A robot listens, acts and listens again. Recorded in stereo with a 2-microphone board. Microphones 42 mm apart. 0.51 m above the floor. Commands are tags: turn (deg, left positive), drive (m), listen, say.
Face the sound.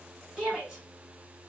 <turn deg="-30"/>
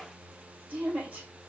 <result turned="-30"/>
<turn deg="-145"/>
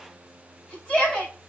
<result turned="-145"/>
<turn deg="25"/>
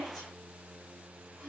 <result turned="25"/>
<listen/>
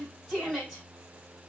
<say>Found it: a shout, straight ahead, 2 to 4 m away.</say>